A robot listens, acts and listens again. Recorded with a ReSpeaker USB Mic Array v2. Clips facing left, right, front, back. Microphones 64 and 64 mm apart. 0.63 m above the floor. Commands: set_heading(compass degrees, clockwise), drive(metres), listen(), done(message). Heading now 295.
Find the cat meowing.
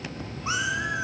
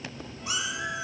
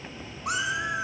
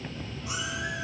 set_heading(265)
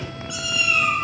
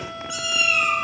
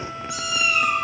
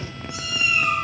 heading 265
done("Facing the cat meowing, 2 to 4 m away.")